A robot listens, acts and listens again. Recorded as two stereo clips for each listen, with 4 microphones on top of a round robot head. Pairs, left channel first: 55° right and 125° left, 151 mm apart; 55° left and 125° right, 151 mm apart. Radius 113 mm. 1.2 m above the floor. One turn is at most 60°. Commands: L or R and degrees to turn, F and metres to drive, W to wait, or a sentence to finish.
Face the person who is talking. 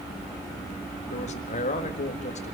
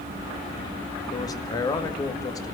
R10
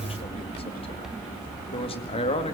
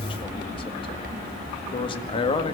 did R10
Facing the man speaking.